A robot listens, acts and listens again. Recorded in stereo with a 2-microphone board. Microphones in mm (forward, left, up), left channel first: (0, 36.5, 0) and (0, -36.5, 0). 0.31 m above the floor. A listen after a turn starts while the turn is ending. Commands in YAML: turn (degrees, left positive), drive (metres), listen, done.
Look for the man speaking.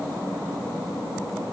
listen: true
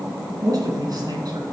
turn: -55
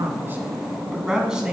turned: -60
turn: -10
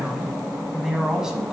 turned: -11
done: "Found it: a man speaking, straight ahead, 1 to 2 m away."